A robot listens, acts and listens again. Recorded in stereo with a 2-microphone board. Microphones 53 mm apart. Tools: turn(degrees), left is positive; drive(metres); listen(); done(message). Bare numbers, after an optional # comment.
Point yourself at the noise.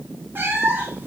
# The cat meowing: about 40° right or 140° right.
turn(-40)
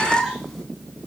done("Found it: a cat meowing, straight ahead, 2 to 4 m away.")